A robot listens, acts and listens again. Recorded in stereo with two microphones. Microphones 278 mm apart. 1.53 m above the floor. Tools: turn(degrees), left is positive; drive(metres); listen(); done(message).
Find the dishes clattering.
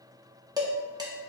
turn(degrees=-30)
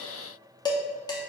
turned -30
turn(degrees=15)
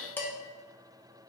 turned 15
turn(degrees=10)
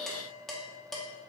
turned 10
done("Facing the dishes clattering, under 1 m away.")